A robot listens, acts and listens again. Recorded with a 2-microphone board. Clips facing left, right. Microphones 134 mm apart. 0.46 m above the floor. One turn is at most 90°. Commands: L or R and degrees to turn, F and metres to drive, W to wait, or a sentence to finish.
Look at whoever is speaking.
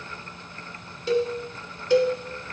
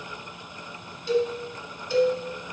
W
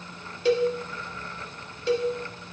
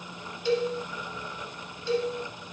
W
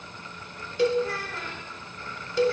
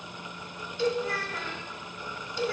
L30
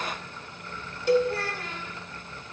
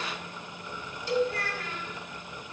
L90
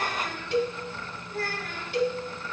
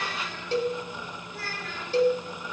L55
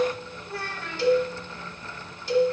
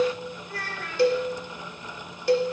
L30
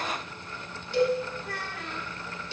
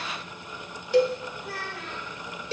Facing the child speaking, 2 to 4 m away.